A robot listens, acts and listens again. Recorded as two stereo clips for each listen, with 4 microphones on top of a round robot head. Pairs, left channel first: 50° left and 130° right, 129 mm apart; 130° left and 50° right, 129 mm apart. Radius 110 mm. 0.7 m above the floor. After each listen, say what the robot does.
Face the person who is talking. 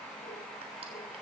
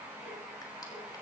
Keep listening.
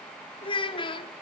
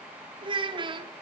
Found it: a child speaking, straight ahead, under 1 m away.